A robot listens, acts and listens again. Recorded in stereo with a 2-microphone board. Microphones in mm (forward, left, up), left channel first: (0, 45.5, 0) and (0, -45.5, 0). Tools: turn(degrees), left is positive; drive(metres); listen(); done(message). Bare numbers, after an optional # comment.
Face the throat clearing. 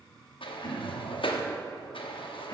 # The throat clearing: about 45° left or 135° left.
turn(45)
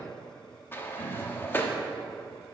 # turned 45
# So it is at 85° left.
turn(85)
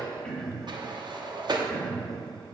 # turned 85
# The throat clearing is now 10° left.
turn(10)
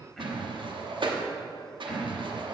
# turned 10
done("Facing the throat clearing, 1 to 2 m away.")